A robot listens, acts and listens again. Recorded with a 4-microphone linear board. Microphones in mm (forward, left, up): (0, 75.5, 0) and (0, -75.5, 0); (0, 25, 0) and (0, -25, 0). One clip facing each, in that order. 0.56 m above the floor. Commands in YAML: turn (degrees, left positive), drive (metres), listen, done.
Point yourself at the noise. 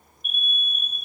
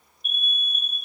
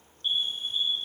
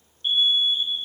turn: -35
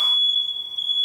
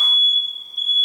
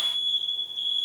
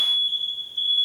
turn: -105
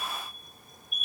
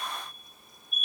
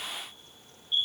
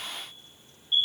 turn: -25
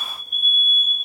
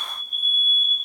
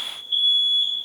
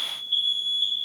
turn: 15
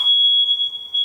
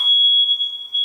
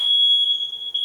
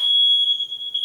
done: "Found it: an alarm, straight ahead."